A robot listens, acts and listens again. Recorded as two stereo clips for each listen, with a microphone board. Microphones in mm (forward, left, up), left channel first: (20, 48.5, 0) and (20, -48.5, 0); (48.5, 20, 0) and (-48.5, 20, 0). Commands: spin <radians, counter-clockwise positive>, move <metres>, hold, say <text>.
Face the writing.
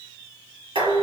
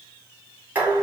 hold
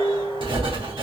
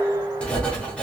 spin -1.40
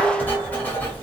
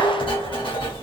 spin 0.35
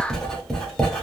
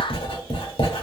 say Facing the writing, 1 to 2 m away.